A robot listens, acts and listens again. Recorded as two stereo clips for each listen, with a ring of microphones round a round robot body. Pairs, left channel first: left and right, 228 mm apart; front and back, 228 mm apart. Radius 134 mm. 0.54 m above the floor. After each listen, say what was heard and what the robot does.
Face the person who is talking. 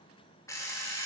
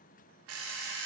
Keep listening.
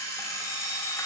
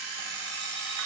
Keep listening.
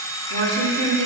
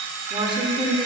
The woman speaking: 110° right. Turn 110° right.
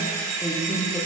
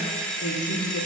Found it: a woman speaking, straight ahead, 1 to 2 m away.